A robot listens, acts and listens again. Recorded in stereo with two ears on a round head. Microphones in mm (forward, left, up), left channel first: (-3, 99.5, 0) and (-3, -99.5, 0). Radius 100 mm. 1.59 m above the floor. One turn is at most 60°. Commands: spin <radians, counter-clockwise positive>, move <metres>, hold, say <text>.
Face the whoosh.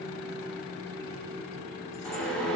spin 0.52
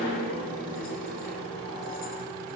spin 1.05
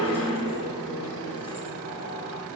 spin 1.05
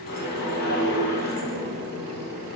spin 0.79
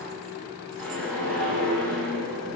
say Facing the whoosh.